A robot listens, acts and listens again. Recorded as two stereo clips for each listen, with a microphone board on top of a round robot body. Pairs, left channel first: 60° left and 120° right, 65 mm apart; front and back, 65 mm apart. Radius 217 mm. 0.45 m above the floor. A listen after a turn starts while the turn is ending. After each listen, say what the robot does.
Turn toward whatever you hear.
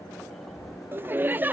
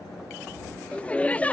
Turn 65° right.
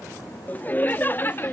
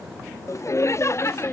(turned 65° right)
Turn 20° left.
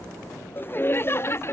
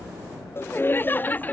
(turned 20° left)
Turn 50° left.
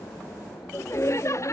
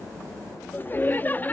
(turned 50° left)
Turn 55° left.
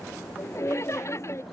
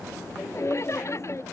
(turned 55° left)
Turn 30° left.
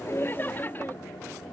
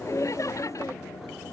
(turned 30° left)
Turn 10° left.
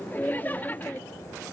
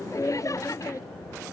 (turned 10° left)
Facing the laughter.